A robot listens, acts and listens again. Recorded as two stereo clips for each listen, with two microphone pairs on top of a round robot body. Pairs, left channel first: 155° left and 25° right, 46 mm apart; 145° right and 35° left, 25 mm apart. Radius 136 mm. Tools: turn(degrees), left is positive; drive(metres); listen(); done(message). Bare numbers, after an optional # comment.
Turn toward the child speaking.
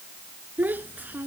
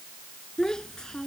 # The child speaking: 80° right.
turn(-80)
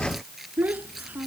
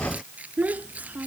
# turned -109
# The child speaking is now 30° left.
turn(30)
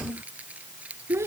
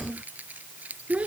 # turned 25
done("Facing the child speaking.")